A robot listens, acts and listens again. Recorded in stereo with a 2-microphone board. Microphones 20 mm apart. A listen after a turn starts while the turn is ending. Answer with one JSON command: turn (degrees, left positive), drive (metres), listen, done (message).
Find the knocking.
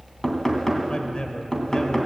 {"turn": 20}
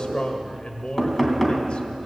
{"done": "Facing the knocking, 2 to 4 m away."}